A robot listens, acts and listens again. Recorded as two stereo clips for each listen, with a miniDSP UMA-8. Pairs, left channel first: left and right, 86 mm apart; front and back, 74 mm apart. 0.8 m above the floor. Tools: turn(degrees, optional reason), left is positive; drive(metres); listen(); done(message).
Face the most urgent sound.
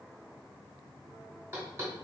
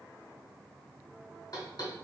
listen()
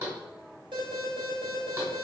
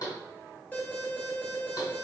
turn(degrees=-70, reason="The alarm: 70° right.")
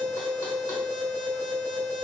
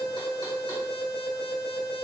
done("Found it: an alarm, straight ahead.")